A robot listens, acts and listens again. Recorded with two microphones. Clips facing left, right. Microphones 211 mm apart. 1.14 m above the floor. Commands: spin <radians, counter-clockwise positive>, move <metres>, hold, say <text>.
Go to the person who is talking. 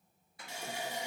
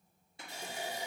hold
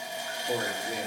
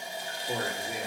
spin 0.44
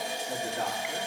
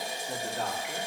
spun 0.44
move 1.0
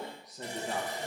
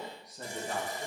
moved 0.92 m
move 1.0
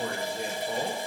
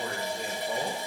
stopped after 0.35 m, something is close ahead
say Arrived at the man speaking, straight ahead.